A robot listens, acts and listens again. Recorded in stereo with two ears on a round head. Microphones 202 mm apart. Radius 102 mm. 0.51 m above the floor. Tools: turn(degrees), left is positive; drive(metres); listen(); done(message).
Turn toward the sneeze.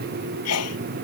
turn(degrees=90)
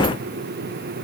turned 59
turn(degrees=30)
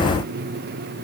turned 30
done("Facing where the sneeze came from. I can't hear it now.")